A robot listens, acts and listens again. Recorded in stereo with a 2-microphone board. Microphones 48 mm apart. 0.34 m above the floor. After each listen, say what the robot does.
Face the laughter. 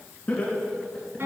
Turn 30° left.
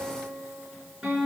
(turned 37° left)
Keep listening.
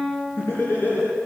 Turn 130° left.
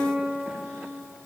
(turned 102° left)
Turn 30° left.
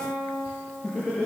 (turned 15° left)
Turn 25° left.
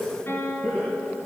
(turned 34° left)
Found it: laughter, straight ahead, over 4 m away.